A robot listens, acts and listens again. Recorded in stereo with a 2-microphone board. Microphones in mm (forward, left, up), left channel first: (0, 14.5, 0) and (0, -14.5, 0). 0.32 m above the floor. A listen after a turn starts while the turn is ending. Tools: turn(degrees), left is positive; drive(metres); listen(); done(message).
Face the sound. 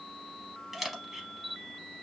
turn(degrees=-30)
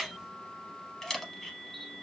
turn(degrees=15)
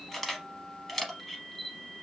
done("Facing the camera shutter.")